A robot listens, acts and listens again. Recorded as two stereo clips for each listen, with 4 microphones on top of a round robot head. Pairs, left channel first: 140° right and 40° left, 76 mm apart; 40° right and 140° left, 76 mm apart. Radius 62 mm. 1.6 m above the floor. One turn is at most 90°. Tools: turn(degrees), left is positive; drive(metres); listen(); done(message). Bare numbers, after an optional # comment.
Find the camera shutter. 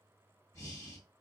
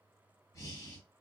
listen()
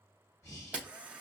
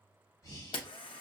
# The camera shutter: 35° right.
turn(-35)
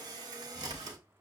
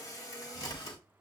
done("Found it: a camera shutter, straight ahead, under 1 m away.")